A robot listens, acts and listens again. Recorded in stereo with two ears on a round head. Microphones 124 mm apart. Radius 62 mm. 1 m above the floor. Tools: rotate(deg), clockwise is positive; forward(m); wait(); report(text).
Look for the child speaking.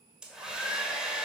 wait()
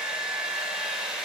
wait()
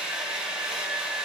report("I can't make out a child speaking, only a hair dryer.")